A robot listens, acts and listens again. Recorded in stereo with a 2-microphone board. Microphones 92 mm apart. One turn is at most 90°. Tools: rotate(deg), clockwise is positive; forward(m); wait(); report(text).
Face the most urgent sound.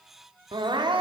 rotate(55)
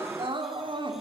rotate(70)
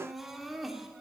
report("Facing the crying.")